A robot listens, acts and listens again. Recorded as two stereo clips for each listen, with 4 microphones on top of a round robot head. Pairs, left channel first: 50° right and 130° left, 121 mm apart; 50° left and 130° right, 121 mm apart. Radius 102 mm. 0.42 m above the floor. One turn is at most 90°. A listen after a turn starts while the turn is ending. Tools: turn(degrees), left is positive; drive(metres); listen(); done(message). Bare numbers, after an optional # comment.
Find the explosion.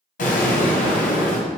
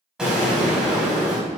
# The explosion: 45° right.
turn(-45)
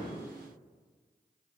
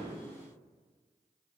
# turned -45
done("Facing where the explosion came from. I can't hear it now.")